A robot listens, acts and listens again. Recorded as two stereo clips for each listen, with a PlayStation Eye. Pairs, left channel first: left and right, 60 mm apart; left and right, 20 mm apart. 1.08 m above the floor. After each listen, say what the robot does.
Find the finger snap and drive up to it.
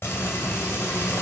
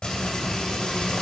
Keep listening.
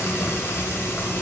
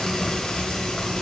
Keep listening.
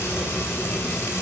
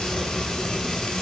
I can't make out a finger snap to turn to.